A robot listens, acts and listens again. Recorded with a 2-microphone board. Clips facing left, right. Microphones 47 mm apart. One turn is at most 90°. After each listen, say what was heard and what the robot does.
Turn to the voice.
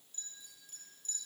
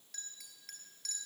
Keep listening.
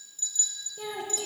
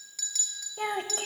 The child speaking: about 55° right or 125° right. Turn 55° right.
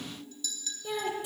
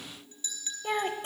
So it is at 55° right. Turn 55° right.
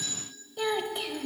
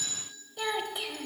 Found it: a child speaking, straight ahead.